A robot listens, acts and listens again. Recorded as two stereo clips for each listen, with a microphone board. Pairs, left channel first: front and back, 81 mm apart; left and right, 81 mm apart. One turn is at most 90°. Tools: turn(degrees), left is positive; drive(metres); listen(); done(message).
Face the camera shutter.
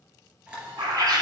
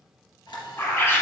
turn(degrees=90)
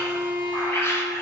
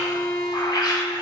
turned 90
turn(degrees=15)
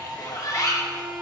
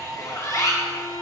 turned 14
done("Facing the camera shutter, 2 to 4 m away.")